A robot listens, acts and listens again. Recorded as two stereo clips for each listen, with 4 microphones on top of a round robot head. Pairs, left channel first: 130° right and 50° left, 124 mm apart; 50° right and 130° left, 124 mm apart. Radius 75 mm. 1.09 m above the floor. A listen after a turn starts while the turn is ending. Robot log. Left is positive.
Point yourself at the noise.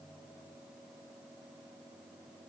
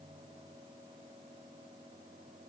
cmd idle
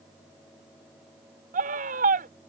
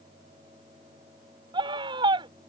note: The scream: 75° left.
cmd yaw +75
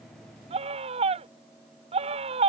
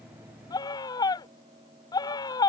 note: The scream is now 10° left.
cmd yaw +10
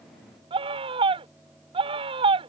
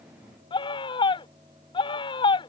end: Found it: a scream, straight ahead.